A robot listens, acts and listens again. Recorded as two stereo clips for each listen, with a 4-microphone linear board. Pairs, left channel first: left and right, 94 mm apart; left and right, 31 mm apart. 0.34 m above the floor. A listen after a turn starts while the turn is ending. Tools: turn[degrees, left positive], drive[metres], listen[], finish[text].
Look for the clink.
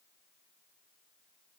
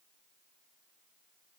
Action: listen[]
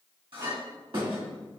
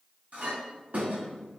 Thought: The clink: about 70° right or 110° right.
Action: turn[-70]
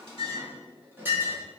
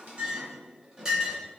Thought: So it is at 25° right.
Action: turn[-25]
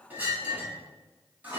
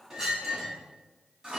Thought: The clink is now 20° right.
Action: turn[-20]
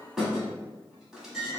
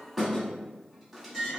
Action: finish[Found it: a clink, straight ahead, 1 to 2 m away.]